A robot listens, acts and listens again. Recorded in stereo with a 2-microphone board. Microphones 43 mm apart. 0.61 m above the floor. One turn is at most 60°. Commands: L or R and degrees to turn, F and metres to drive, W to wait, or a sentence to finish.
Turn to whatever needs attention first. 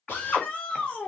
L35
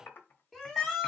Facing the shout.